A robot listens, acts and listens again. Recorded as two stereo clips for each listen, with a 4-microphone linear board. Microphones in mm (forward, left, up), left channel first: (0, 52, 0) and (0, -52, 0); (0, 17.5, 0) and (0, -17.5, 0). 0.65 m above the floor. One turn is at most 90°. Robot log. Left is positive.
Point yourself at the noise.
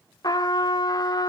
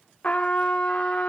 note: The trumpet: about 40° left or 140° left.
cmd yaw +40
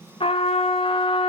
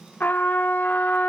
note: So it is at 95° left.
cmd yaw +90
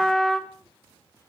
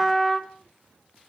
end: Found it: a trumpet, straight ahead, 1 to 2 m away.